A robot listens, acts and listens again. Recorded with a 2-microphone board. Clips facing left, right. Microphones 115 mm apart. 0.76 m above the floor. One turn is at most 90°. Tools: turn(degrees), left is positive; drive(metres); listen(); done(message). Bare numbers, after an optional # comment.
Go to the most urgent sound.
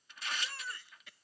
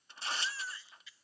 # The baby crying: about 55° left or 125° left.
turn(55)
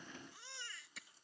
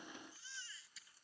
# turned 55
# So it is at 65° left.
turn(65)
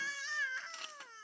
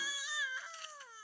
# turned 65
# The baby crying is now 10° right.
turn(-10)
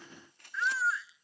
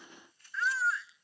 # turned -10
drive(1.0)
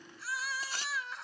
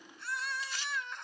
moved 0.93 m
drive(1.0)
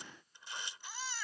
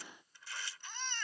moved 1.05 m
drive(1.0)
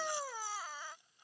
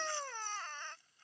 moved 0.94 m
# The baby crying is now 10° left.
turn(10)
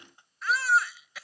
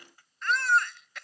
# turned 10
drive(1.0)
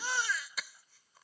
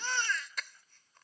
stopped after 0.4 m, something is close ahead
done("I am next to the baby crying.")